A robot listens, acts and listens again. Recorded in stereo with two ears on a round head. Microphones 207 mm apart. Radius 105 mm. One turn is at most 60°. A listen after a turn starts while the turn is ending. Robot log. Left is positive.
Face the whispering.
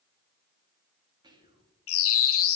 note: The whispering: about 20° right or 160° right.
cmd yaw -20
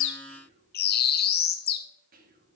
note: So it is at 140° right.
cmd yaw -60
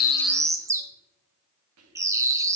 note: The whispering is now 80° right.
cmd yaw -60
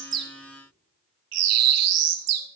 note: Nothing new. It was at 20° right.
cmd yaw -20
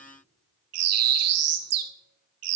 cmd idle
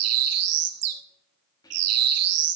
note: The whispering is now 15° left.
cmd yaw +15
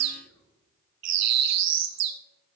note: The whispering is now 10° left.
cmd yaw +10
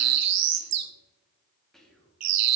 end: Found it: whispering, straight ahead, 2 to 4 m away.